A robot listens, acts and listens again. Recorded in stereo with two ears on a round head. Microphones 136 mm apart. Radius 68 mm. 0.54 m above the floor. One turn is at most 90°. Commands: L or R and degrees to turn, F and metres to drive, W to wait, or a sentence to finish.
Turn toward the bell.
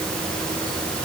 W
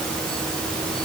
W
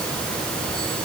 I can't make out a bell.